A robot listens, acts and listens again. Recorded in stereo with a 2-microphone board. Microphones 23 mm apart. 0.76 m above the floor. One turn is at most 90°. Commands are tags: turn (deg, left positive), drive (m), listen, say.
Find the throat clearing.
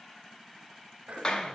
<turn deg="-75"/>
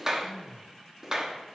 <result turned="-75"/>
<turn deg="-15"/>
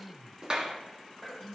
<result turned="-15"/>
<say>Found it: throat clearing, straight ahead, 1 to 2 m away.</say>